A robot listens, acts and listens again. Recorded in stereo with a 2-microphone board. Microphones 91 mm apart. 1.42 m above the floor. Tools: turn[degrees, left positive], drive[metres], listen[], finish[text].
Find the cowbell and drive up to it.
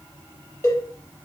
Thought: The cowbell: about 25° left or 155° left.
Action: turn[25]
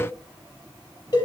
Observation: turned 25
Thought: So it is at 130° left.
Action: turn[130]
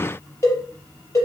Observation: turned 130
Thought: The cowbell is now 35° left.
Action: turn[35]
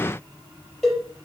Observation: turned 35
Action: drive[1.0]
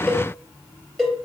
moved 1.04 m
Action: drive[1.0]
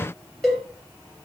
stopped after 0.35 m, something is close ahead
Action: finish[Something is in my way. I am facing the cowbell but have not reached it.]